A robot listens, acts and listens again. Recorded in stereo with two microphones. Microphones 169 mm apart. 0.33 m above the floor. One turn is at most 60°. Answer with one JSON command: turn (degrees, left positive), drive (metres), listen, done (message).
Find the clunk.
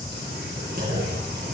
{"turn": -60}
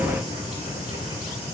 {"listen": true}
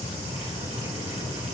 {"done": "I heard a clunk, but can't make it out now. It was about straight ahead or 60° right."}